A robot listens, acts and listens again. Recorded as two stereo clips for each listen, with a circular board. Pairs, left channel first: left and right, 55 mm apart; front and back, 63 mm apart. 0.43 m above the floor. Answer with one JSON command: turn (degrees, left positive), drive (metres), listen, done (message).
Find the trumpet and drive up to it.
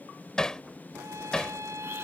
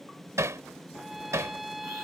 {"turn": -90}
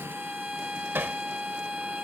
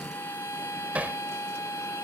{"turn": -15}
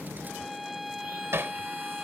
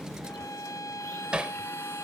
{"drive": 1.0}
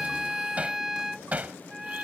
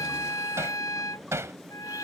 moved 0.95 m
{"drive": 1.0}
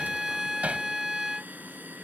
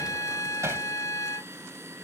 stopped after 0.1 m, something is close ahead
{"done": "Arrived at the trumpet, straight ahead."}